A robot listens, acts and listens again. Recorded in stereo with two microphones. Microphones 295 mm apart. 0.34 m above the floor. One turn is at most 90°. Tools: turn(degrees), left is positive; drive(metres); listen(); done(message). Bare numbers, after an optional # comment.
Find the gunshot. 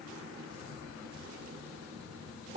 listen()
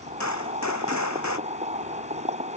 # The gunshot: about 65° left or 115° left.
turn(65)
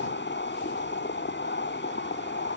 listen()
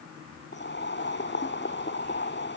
done("I heard a gunshot, but can't make it out now. It was about straight ahead or 50° left.")